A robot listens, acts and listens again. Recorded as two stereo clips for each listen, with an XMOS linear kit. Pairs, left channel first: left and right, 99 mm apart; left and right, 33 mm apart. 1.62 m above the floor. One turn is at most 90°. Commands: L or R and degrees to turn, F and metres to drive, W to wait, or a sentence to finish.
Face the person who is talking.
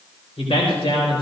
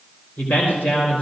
L70
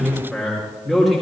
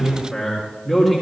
Found it: a man speaking, straight ahead, over 4 m away.